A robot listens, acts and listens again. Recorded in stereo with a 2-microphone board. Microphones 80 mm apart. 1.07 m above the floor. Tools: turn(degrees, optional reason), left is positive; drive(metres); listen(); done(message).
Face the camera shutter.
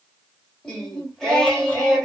listen()
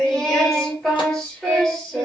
listen()
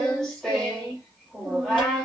done("I can't make out a camera shutter, only singing.")